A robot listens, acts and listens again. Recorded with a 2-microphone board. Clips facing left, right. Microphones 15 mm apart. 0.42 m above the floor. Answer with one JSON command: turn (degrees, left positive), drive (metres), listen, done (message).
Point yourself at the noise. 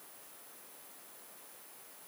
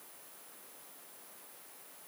{"listen": true}
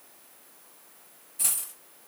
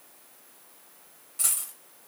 {"turn": -45}
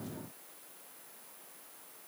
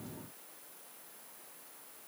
{"listen": true}
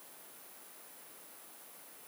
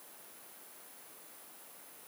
{"done": "I heard a dropped coin, but can't make it out now. It was about straight ahead or 90° right."}